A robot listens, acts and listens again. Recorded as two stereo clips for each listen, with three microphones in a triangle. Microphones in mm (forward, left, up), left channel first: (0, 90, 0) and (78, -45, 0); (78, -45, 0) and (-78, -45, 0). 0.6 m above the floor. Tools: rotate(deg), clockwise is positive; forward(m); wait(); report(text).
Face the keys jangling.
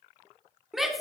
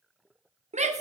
wait()
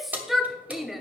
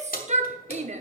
rotate(-20)
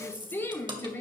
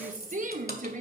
wait()
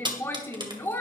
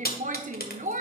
report("Found it: keys jangling, straight ahead, 1 to 2 m away.")